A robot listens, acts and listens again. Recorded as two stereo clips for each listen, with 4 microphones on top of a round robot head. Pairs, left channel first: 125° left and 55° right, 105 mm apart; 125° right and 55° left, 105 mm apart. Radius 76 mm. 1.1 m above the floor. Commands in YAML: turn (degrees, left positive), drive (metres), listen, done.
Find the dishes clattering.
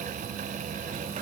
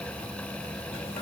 listen: true
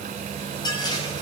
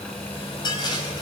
turn: 180
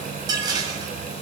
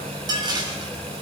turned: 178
done: "Facing the dishes clattering, over 4 m away."